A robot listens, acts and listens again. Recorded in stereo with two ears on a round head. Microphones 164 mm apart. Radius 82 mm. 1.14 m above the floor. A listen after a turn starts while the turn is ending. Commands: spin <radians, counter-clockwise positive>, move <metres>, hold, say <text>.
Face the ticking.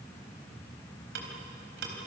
spin -1.13
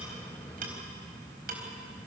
hold
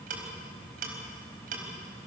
spin -0.87
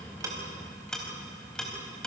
say Facing the ticking.